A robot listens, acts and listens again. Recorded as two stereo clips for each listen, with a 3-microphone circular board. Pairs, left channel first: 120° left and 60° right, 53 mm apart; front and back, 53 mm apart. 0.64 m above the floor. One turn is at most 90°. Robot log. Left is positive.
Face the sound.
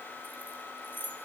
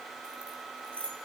note: The keys jangling: 70° left.
cmd yaw +70
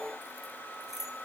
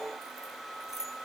note: The keys jangling is now 25° left.
cmd yaw +25
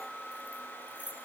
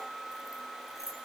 end: Found it: keys jangling, straight ahead, over 4 m away.